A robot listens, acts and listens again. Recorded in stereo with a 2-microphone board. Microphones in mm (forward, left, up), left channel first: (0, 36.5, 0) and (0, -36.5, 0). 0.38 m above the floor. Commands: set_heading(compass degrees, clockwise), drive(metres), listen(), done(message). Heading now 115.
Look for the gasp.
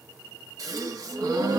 set_heading(170)
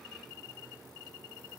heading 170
listen()
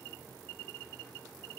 done("I heard a gasp, but can't make it out now. It was about straight ahead or 70° right.")